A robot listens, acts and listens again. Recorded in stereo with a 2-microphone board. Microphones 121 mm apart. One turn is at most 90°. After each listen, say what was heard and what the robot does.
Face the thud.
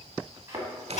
The thud: about 25° right or 155° right. Turn 25° right.
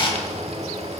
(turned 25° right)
Keep listening.
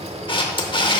I heard a thud, but can't make it out now. It was about straight ahead or 130° right.